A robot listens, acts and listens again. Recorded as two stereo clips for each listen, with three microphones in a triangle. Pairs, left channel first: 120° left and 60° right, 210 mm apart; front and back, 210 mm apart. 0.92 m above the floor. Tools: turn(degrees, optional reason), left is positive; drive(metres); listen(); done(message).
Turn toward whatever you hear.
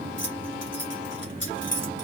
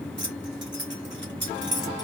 turn(degrees=150, reason="The keys jangling: 150° left.")
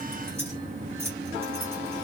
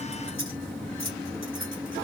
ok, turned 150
turn(degrees=20, reason="The keys jangling is now 20° left.")
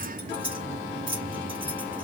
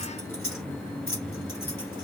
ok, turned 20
done("Found it: keys jangling, straight ahead, 2 to 4 m away.")